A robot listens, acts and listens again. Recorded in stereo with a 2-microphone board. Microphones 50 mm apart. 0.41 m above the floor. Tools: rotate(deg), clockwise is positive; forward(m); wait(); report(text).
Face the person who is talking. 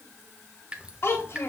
rotate(-55)
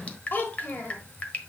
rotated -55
rotate(-50)
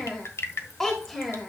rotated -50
rotate(-10)
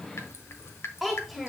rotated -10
report("Found it: a child speaking, straight ahead, 1 to 2 m away.")